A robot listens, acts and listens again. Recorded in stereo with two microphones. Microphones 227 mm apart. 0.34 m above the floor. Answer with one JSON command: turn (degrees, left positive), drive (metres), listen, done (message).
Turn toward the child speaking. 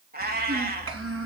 {"turn": -90}
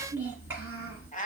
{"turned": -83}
{"turn": -10}
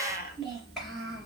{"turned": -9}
{"done": "Found it: a child speaking, straight ahead, 2 to 4 m away."}